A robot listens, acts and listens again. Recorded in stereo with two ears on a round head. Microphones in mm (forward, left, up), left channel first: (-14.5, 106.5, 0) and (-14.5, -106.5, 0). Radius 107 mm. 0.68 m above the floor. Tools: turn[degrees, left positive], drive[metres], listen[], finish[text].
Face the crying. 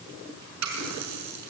Action: listen[]
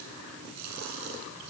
Action: listen[]
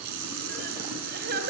Thought: The crying: about 40° right or 140° right.
Action: turn[-40]
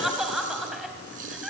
Action: finish[Found it: crying, straight ahead, 2 to 4 m away.]